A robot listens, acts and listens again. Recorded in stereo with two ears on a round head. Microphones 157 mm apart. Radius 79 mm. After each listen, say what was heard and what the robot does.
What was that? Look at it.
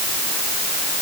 Keep listening.
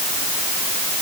Keep listening.
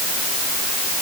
I can't make out anything.